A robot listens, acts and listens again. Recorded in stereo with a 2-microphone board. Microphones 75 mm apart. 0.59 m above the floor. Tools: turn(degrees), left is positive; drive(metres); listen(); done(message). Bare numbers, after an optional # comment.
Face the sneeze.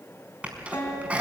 # The sneeze: about 20° right or 160° right.
turn(-20)
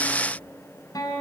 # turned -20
listen()
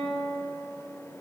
done("I heard a sneeze, but can't make it out now. It was about straight ahead or 140° right.")